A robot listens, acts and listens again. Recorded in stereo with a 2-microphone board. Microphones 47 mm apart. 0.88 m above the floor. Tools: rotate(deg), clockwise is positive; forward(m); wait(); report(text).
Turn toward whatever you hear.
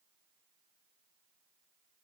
wait()
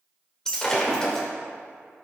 rotate(-30)
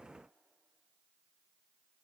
wait()
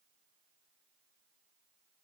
report("I heard breaking glass, but can't make it out now. It was about 15° right or 135° left.")